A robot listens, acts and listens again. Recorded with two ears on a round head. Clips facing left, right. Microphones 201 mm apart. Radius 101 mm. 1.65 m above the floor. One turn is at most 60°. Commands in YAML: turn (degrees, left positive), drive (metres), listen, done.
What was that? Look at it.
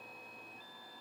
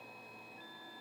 listen: true
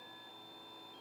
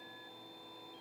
listen: true
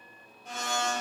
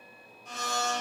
turn: 50
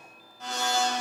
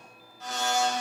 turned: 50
turn: 60
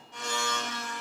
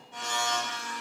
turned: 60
turn: -20
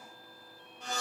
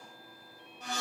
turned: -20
done: "Found it: a blender, straight ahead, 1 to 2 m away."